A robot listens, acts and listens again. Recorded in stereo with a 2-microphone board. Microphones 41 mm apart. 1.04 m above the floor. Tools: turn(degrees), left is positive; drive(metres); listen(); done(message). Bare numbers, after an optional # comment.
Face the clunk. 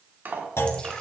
turn(90)
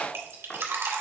done("I heard a clunk from this way, but can't make it out now.")